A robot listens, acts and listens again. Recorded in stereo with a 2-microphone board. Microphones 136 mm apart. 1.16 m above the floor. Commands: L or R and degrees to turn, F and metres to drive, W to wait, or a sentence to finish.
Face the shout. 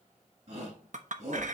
R55
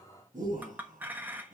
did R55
R70
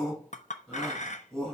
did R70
Found it: a shout, straight ahead.